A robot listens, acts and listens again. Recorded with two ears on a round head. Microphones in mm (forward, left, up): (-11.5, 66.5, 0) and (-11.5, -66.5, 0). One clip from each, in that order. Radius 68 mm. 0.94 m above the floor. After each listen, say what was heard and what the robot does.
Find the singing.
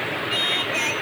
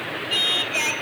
The singing: about 30° right or 150° right. Turn 30° right.
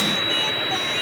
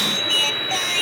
So it is at 120° right. Turn 120° right.
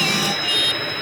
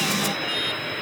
The singing is now 35° left. Turn 35° left.
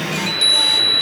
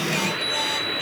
Keep listening.
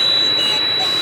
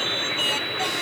Keep listening.
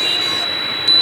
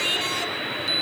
Facing where the singing came from. I can't hear it now.